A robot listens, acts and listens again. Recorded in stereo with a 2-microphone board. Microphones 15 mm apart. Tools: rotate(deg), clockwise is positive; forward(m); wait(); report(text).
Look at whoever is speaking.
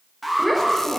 rotate(-30)
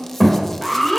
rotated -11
rotate(-170)
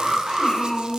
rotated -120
rotate(-50)
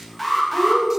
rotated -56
report("Facing the child speaking, 2 to 4 m away.")